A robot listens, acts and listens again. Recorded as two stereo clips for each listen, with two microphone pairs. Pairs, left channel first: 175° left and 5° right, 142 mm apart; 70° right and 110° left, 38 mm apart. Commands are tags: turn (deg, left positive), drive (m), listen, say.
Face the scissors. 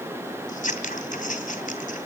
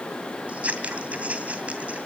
<turn deg="160"/>
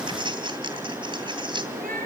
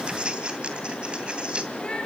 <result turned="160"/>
<turn deg="50"/>
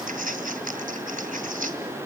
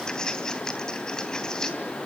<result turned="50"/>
<say>Facing the scissors.</say>